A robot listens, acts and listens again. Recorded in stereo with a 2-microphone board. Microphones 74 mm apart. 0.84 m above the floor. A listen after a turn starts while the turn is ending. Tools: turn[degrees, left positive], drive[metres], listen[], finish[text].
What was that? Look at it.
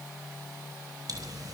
Thought: The pop: about 55° right or 125° right.
Action: turn[-55]
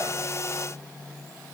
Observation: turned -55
Action: listen[]
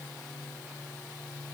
Action: finish[I heard a pop, but can't make it out now. It was about straight ahead or 70° right.]